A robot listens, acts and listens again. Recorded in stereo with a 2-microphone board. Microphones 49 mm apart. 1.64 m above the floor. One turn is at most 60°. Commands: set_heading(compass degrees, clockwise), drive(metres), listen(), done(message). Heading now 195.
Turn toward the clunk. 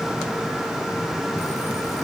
listen()
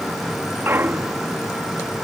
set_heading(250)
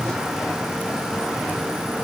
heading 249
listen()
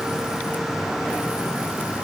done("I heard a clunk, but can't make it out now. It was about straight ahead or 70° right.")